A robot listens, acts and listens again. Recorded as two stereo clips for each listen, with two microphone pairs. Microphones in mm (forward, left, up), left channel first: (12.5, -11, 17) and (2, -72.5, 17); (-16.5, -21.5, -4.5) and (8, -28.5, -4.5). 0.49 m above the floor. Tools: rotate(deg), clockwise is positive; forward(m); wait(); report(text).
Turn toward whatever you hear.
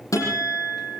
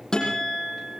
rotate(-105)
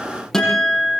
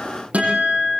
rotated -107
report("Found it: a guitar, straight ahead, over 4 m away.")